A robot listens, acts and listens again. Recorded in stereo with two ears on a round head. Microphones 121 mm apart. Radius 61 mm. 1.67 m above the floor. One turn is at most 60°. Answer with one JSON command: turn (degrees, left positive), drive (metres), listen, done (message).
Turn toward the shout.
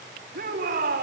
{"turn": -60}
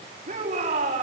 {"turn": -45}
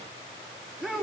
{"done": "Facing the shout."}